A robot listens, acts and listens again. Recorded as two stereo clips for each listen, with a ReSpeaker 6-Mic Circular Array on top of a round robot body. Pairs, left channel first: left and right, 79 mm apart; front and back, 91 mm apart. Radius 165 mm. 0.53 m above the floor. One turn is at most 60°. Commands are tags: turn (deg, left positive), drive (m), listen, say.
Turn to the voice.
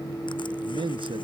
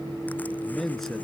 <turn deg="-60"/>
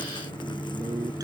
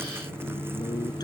<turn deg="-30"/>
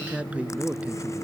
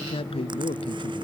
<turn deg="-15"/>
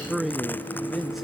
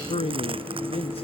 <say>Facing the man speaking.</say>